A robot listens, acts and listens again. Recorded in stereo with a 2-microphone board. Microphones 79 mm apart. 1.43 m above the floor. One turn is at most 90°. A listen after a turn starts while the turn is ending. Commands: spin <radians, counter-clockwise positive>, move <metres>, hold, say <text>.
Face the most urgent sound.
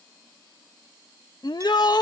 spin 1.05
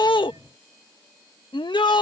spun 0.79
spin 1.31
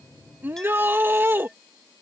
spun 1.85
spin -0.44
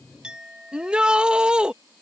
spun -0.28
spin -0.17
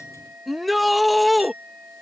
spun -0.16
say Facing the shout.